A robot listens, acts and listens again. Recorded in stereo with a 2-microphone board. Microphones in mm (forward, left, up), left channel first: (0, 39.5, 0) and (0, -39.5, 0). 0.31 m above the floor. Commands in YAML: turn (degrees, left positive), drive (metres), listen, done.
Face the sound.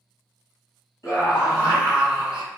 turn: 40
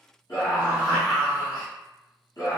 turn: 85
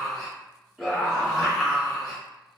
done: "Found it: a scream, straight ahead."